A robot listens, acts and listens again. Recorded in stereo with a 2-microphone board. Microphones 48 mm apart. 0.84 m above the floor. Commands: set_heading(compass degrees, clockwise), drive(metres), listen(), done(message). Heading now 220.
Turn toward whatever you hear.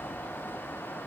listen()
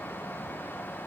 listen()
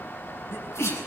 set_heading(130)
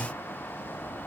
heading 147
set_heading(132)
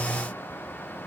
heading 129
done("Facing where the sneeze came from. I can't hear it now.")